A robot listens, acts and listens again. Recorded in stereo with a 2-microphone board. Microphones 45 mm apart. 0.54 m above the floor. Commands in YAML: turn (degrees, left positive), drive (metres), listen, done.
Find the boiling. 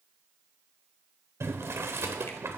turn: -65
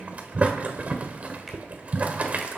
turn: -30
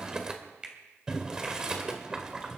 turn: -15
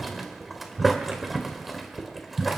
done: "Facing the boiling."